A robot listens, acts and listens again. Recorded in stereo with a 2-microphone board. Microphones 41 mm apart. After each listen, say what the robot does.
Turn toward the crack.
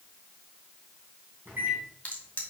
Turn 35° left.
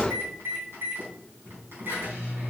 Keep listening.
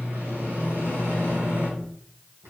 I heard a crack, but can't make it out now. It was about straight ahead or 110° left.